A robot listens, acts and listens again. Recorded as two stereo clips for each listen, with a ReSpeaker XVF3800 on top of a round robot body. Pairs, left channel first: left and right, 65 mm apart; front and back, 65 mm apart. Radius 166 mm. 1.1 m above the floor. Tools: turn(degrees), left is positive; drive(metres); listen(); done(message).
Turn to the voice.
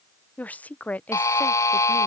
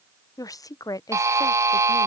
turn(degrees=25)
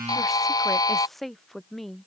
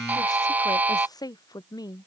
done("Facing the woman speaking.")